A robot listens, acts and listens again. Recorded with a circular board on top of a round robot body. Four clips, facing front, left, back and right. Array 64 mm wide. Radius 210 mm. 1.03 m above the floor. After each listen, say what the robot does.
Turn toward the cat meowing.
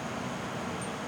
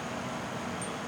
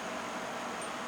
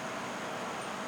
Keep listening.
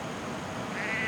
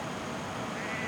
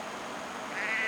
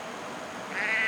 Turn 95° right.
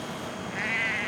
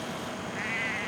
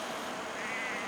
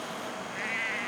Found it: a cat meowing, straight ahead.